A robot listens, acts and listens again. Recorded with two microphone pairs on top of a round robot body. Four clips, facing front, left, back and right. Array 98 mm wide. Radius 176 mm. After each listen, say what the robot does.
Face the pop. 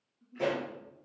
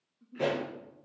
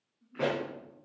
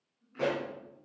Turn 155° right.
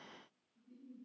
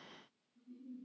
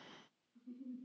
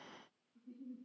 Facing where the pop came from. I can't hear it now.